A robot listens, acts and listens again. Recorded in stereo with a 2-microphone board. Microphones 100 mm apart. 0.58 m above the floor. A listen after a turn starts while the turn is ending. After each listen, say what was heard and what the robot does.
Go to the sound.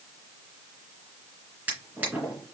The drawer: about 20° right or 160° right. Turn 20° right.
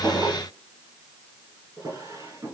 So it is at 145° right. Turn 145° right.
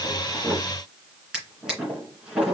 Drive 1.0 m forward.
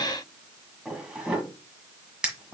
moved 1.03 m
The drawer is now 10° right. Turn 10° right.
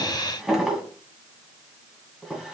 Drive 1.0 m forward.
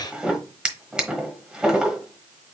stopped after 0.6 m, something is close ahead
The drawer is now 10° right. Turn 10° right.
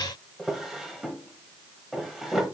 Arrived at the drawer, straight ahead.